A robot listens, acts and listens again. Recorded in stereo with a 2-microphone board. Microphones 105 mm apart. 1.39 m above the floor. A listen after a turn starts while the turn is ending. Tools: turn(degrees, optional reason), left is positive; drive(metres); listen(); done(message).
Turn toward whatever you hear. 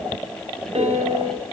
turn(degrees=-75, reason="The piano: about 75° right or 105° right.")
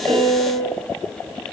turn(degrees=-10, reason="So it is at 10° right.")
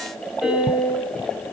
done("Facing the piano, 2 to 4 m away.")